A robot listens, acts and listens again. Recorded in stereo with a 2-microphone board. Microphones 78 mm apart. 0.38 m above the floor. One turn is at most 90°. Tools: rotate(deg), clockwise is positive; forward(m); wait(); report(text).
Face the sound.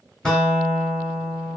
rotate(-30)
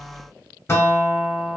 rotate(-90)
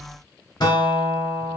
rotate(-80)
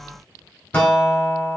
rotate(-20)
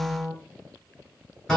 rotate(-10)
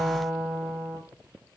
report("Found it: a guitar, straight ahead, under 1 m away.")